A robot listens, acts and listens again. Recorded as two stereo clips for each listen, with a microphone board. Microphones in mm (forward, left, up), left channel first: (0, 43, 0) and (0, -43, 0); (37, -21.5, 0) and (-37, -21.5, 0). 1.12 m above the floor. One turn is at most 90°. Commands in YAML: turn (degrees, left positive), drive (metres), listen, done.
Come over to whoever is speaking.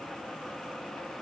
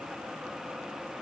listen: true
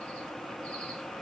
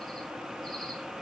listen: true
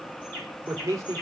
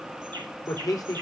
turn: -40
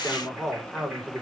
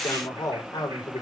drive: 1.0
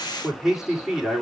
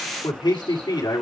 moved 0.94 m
drive: 1.0
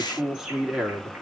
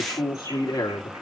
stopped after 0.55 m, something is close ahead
done: "Something is in my way. I am facing the man speaking but have not reached it."